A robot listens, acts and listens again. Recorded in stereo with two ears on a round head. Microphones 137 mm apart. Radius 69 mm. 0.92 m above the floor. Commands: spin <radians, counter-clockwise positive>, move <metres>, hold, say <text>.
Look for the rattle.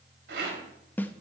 spin -1.57
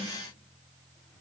hold
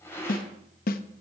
spin 0.26
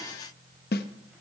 hold
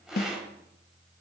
say Found it: a rattle, straight ahead, 2 to 4 m away.